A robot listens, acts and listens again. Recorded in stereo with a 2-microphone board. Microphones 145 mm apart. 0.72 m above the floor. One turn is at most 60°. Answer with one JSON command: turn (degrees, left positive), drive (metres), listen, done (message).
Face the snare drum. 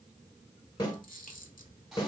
{"turn": 30}
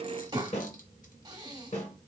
{"turn": 60}
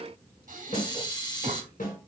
{"turn": 60}
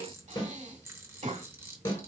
{"turn": 35}
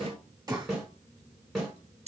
{"done": "Found it: a snare drum, straight ahead, 1 to 2 m away."}